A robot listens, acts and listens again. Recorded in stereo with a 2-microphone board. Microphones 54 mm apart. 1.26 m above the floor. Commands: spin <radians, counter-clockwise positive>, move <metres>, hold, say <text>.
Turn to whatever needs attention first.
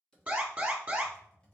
spin -0.52
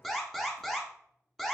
say Facing the alarm, 1 to 2 m away.